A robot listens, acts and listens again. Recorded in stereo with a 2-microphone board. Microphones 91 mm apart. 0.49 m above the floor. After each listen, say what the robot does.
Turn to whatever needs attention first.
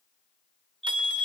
Turn 30° left.
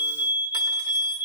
Turn 20° right.
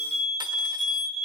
Turn 10° right.
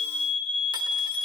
Facing the fire alarm.